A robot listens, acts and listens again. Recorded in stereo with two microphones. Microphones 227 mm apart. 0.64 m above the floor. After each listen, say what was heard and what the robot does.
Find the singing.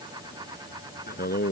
The singing: about 45° left or 135° left. Turn 45° left.
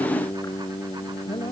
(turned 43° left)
So it is at 20° left. Turn 20° left.
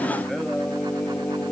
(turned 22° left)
The singing is now 10° left. Turn 10° left.
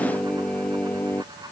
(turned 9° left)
The singing is now 10° left. Turn 10° left.
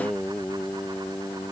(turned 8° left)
Found it: singing, straight ahead.